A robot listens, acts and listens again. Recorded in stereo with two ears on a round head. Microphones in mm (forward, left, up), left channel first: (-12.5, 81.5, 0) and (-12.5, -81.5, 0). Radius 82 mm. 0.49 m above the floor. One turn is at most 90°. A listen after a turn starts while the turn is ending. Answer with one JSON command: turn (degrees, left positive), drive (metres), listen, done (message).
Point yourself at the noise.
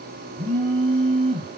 {"turn": -35}
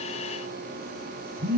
{"turn": -90}
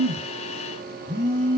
{"turn": -25}
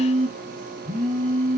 {"turn": -25}
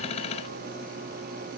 {"listen": true}
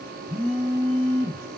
{"turn": -10}
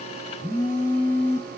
{"done": "Found it: a phone buzzing, straight ahead, over 4 m away."}